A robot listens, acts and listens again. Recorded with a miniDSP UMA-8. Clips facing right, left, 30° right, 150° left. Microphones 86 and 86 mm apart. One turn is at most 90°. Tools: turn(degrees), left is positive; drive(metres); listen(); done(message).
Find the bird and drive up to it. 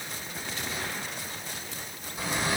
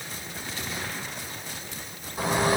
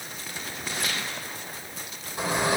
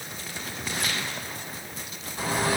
turn(degrees=40)
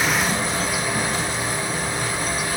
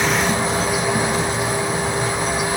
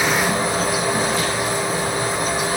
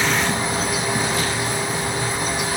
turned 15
turn(degrees=25)
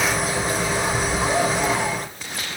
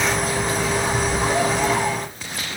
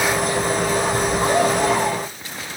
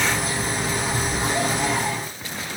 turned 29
drive(metres=1.0)
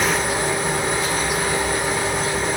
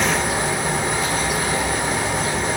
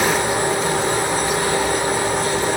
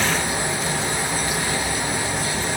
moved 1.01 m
drive(metres=1.0)
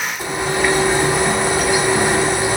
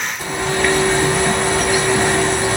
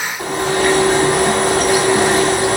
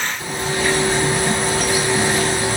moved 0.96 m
drive(metres=1.0)
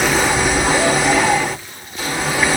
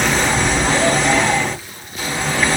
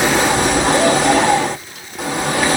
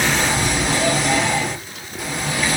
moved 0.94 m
turn(degrees=-10)
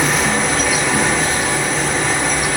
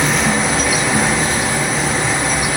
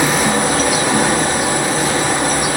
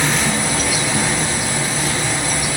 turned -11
drive(metres=1.0)
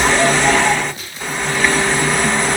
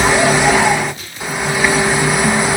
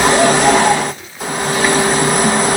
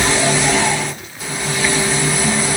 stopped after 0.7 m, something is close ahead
turn(degrees=10)
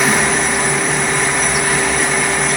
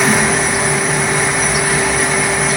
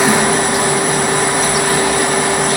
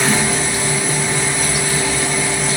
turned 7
done("I am next to the bird.")